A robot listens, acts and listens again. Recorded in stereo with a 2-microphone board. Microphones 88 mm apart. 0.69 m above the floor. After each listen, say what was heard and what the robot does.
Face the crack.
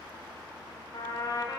Keep listening.
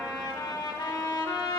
Keep listening.
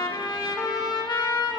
I can't make out a crack to turn to.